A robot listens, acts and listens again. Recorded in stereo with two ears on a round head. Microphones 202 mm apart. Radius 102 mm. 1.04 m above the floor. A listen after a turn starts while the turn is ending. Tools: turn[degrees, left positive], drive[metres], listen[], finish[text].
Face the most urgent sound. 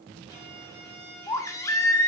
Action: turn[30]
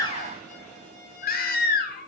Thought: So it is at 135° left.
Action: turn[135]
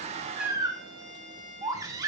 Thought: The baby crying is now 15° right.
Action: turn[-15]
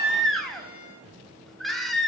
Action: finish[Found it: a baby crying, straight ahead, 1 to 2 m away.]